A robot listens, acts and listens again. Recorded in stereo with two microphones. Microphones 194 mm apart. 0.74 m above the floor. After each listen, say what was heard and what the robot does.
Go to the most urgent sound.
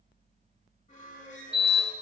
Turn 30° right.
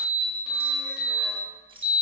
So it is at 25° left. Turn 25° left.
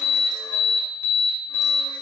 The alarm is now 15° left. Turn 15° left.
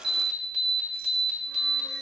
Drive 1.0 m forward.
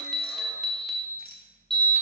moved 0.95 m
Drive 1.0 m forward.
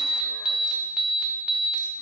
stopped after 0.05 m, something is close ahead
Arrived at the alarm, straight ahead.